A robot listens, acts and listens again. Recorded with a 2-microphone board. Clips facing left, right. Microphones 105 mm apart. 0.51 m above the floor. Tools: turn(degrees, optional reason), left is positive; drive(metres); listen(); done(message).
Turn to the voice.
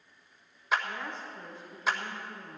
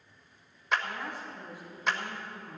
turn(degrees=-30)
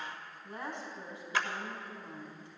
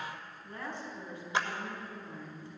turn(degrees=20, reason="So it is at 20° left.")
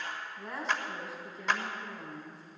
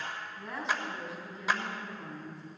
done("Found it: a woman speaking, straight ahead, over 4 m away.")